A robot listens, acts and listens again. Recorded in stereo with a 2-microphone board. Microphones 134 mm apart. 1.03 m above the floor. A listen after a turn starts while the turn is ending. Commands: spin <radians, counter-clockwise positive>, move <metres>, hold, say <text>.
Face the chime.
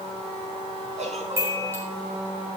spin -0.35
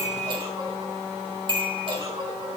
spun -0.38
spin -2.44
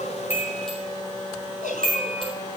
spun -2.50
say Found it: a chime, straight ahead.